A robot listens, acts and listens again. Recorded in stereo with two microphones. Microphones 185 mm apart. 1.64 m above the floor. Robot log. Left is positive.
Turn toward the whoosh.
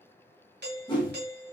note: The whoosh: about 25° left or 155° left.
cmd yaw +25
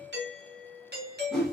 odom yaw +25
end: Facing the whoosh, 1 to 2 m away.